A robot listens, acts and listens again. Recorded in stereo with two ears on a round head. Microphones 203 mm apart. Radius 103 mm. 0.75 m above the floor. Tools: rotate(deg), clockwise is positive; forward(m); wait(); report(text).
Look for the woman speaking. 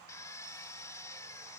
wait()
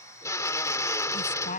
rotate(-35)
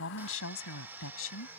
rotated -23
rotate(-110)
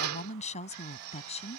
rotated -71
rotate(-30)
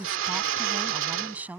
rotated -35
report("Facing the woman speaking.")